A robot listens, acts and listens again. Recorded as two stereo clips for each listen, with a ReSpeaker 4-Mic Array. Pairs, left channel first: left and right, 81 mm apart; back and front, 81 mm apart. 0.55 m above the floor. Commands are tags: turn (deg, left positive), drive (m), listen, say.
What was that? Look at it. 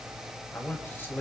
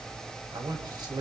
<turn deg="25"/>
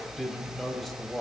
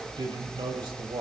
<say>Found it: a man speaking, straight ahead.</say>